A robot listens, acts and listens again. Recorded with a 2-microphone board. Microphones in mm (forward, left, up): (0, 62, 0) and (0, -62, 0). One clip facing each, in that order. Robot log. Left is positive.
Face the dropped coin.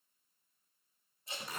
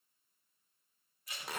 cmd idle
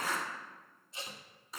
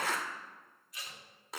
cmd idle
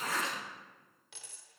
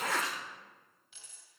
cmd yaw +90
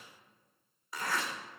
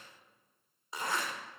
end: Facing where the dropped coin came from. I can't hear it now.